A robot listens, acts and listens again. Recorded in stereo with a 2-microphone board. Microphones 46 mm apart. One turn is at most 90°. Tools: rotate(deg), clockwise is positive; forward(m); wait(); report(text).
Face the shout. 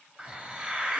wait()
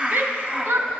rotate(55)
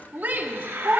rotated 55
rotate(60)
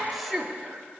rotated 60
report("Found it: a shout, straight ahead, 1 to 2 m away.")